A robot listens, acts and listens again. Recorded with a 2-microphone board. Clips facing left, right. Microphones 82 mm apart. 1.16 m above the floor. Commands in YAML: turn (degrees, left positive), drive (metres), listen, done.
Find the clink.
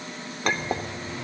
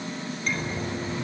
turn: 90
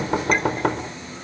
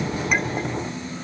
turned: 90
listen: true
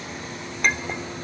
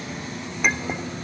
done: "Facing the clink, 2 to 4 m away."